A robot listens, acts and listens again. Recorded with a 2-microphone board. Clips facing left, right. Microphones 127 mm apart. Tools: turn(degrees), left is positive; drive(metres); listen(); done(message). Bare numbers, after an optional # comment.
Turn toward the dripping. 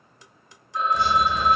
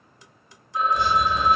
# The dripping: about 60° left or 120° left.
turn(60)
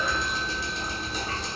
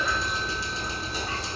done("Found it: dripping, straight ahead.")